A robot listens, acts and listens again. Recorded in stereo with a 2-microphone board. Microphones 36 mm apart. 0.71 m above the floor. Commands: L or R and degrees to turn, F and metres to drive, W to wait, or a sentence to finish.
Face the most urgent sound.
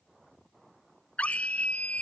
L40
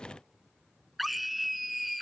Facing the scream.